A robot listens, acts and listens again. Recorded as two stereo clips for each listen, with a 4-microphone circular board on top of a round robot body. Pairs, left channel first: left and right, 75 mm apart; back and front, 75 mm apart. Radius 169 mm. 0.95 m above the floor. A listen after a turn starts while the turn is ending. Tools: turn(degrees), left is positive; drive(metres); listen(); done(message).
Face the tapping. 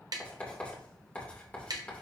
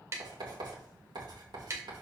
turn(degrees=-55)
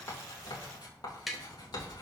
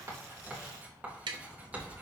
done("Facing the tapping.")